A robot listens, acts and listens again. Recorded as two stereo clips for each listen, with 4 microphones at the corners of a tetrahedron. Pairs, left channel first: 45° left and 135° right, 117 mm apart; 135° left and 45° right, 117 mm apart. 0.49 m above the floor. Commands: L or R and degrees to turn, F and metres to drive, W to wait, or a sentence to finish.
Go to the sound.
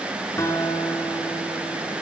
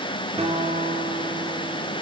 R20
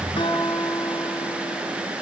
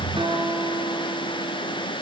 F1.0
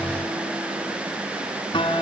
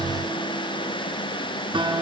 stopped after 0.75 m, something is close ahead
Something is in my way. I am facing the guitar but have not reached it.